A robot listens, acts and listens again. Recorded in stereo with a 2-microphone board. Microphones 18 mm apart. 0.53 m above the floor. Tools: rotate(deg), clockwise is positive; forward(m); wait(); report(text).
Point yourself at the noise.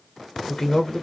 rotate(-20)
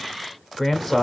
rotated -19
report("Found it: a man speaking, straight ahead.")